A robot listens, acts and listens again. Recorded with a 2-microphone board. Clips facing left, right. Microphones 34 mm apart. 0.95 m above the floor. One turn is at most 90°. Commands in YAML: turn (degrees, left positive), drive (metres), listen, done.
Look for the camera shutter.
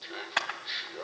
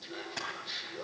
turn: 60
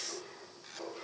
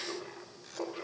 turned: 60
listen: true
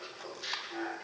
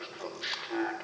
listen: true
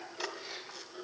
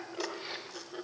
done: "I heard a camera shutter, but can't make it out now. It was about straight ahead or 60° left."